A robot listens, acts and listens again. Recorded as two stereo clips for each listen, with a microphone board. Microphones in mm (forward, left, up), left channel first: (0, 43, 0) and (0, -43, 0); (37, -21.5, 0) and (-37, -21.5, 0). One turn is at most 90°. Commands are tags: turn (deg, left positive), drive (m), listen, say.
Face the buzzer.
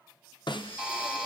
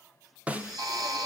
<turn deg="-90"/>
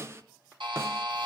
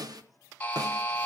<turn deg="-70"/>
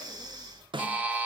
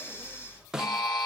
<turn deg="-20"/>
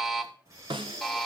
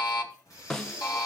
<say>Facing the buzzer, 2 to 4 m away.</say>